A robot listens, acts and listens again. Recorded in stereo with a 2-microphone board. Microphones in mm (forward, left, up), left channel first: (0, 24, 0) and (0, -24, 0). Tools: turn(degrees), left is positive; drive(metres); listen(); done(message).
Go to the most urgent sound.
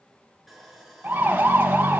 turn(degrees=-35)
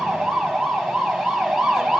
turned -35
drive(metres=1.0)
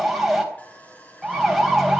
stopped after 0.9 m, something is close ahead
done("Something is in my way. I am facing the siren but have not reached it.")